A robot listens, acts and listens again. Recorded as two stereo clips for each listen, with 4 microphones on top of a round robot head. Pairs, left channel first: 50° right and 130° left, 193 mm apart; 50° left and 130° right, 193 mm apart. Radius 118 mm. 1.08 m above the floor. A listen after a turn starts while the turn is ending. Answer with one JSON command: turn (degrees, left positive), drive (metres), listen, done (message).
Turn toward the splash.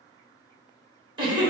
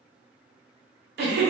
{"listen": true}
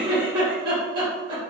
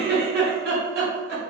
{"listen": true}
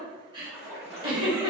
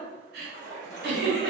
{"turn": 160}
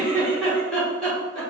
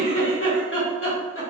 {"done": "I heard a splash from this way, but can't make it out now."}